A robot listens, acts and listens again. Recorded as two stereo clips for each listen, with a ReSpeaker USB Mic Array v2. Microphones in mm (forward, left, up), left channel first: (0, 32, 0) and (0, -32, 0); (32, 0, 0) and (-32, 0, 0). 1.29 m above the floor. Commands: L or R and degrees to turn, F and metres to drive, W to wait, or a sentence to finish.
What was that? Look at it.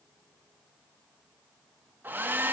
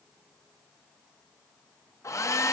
R30
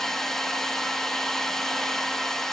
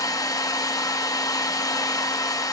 Facing the hair dryer.